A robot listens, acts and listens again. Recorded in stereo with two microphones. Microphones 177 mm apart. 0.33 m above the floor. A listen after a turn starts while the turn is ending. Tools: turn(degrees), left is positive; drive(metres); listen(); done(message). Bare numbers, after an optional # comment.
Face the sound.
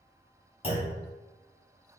# The clunk: about 35° left or 145° left.
turn(35)
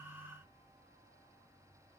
listen()
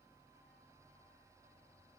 done("I heard a clunk, but can't make it out now. It was about straight ahead or 110° left.")